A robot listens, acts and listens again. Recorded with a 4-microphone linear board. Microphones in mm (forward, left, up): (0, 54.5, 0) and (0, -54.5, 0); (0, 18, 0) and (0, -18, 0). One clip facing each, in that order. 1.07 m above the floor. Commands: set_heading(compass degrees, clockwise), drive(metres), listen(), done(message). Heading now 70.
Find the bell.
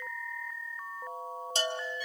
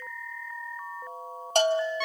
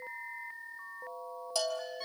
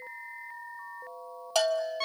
set_heading(130)
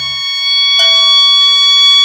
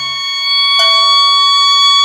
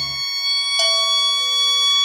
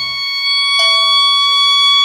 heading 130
listen()
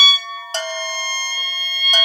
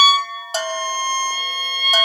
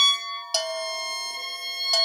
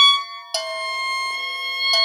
done("Facing the bell.")